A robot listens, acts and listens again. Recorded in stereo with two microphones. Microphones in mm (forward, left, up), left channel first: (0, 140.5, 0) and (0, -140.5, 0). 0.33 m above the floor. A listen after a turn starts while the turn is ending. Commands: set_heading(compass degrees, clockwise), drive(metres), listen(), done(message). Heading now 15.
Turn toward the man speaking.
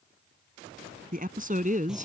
set_heading(40)
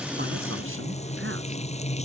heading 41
listen()
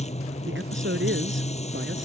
set_heading(176)
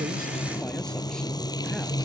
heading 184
listen()
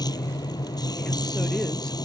listen()
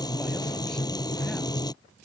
done("Facing where the man speaking came from. I can't hear it now.")